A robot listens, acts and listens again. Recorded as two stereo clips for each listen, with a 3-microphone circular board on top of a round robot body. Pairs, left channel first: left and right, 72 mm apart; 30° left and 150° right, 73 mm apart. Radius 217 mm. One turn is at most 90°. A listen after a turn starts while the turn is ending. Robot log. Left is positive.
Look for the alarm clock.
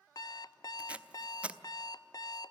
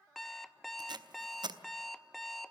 note: The alarm clock: 120° left.
cmd yaw +90
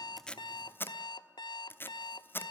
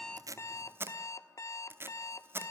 note: The alarm clock is now 75° left.
cmd yaw +75
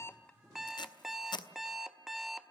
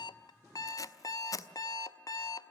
end: Facing the alarm clock, under 1 m away.